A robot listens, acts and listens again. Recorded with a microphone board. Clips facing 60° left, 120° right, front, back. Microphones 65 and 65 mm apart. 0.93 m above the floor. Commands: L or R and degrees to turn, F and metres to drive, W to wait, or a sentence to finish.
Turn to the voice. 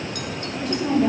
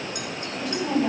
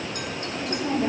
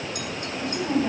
L20
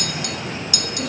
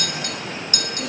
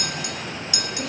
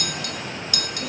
W
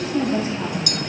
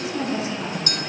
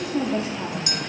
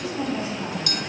L15
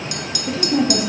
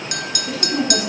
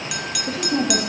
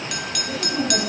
L15
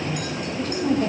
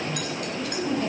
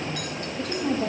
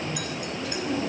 L25
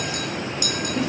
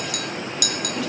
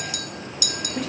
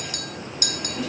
W
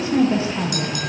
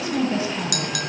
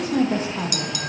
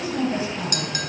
L10
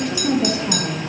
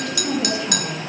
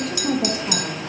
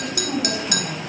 Facing the woman speaking.